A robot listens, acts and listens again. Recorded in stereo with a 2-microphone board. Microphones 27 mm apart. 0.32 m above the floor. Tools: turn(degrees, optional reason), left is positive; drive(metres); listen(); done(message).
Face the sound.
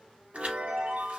turn(degrees=-50, reason="The chime: about 50° right or 130° right.")
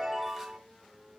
done("Found it: a chime, straight ahead.")